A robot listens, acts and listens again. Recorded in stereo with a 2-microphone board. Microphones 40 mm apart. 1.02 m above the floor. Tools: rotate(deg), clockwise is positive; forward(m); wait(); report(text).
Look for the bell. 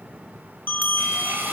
rotate(-50)
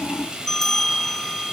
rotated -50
rotate(-15)
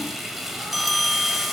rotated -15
report("Facing the bell.")